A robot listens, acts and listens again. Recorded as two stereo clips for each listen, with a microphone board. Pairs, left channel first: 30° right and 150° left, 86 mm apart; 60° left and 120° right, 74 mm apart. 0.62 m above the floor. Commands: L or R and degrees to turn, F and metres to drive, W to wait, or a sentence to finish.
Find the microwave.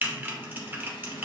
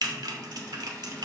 W
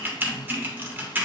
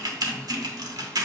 W
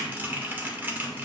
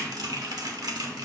I can't make out a microwave to turn to.